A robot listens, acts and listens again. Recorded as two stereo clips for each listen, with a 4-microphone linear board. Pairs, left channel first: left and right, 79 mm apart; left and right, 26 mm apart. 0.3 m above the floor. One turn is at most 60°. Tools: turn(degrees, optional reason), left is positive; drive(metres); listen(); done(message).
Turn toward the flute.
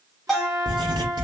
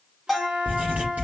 turn(degrees=-50, reason="The flute: about 50° right or 130° right.")
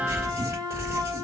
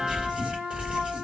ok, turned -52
turn(degrees=-60, reason="So it is at 70° right.")
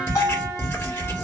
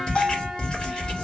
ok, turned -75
listen()
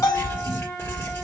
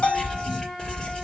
done("Facing the flute.")